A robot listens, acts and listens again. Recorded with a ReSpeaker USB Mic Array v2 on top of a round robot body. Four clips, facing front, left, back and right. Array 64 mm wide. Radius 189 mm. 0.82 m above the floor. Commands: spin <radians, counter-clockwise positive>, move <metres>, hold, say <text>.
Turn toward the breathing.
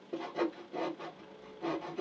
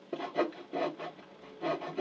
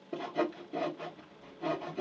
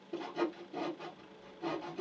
hold
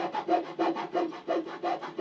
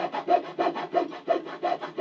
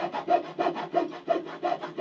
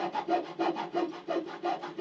hold
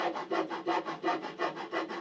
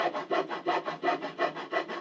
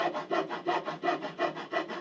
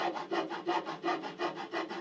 say I can't make out breathing to turn to.